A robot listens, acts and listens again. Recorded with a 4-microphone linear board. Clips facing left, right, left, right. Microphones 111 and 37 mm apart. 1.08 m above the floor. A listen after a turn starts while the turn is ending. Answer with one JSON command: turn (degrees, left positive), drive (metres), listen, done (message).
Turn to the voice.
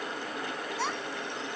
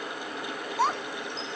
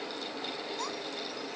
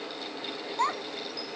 {"turn": -45}
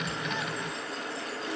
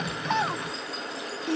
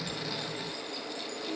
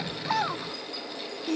{"turn": -85}
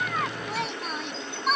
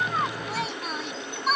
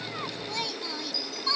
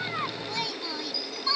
{"done": "Found it: a child speaking, straight ahead."}